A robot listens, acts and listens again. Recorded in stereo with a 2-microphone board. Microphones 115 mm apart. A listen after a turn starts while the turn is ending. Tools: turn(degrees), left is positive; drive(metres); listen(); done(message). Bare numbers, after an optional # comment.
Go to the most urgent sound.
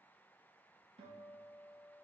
listen()
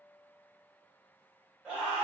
turn(-30)
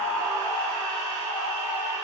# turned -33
# So it is at 140° right.
turn(-140)
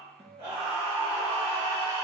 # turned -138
drive(1.0)
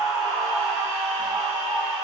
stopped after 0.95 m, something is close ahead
done("Arrived at the scream, straight ahead.")